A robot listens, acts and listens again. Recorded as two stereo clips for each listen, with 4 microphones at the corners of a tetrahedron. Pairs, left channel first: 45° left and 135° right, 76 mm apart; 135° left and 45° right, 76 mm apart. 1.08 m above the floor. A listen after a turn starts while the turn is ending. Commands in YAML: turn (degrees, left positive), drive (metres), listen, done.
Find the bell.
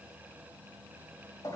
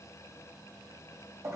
listen: true
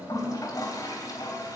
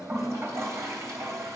listen: true
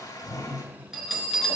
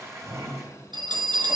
turn: -50
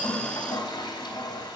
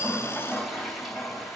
listen: true
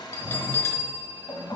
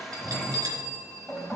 turn: -15
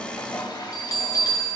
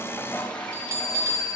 done: "Facing the bell."